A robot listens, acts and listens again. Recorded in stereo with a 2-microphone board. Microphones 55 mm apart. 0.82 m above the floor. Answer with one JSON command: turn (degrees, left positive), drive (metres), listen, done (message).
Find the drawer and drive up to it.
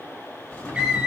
{"turn": 15}
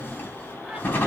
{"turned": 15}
{"turn": 145}
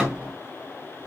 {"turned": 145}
{"turn": -10}
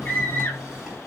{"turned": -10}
{"drive": 1.0}
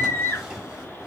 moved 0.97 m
{"drive": 1.0}
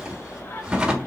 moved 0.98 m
{"turn": -15}
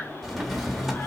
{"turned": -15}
{"drive": 1.0}
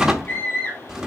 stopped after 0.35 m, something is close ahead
{"turn": -10}
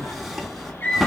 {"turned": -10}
{"done": "Arrived at the drawer, straight ahead."}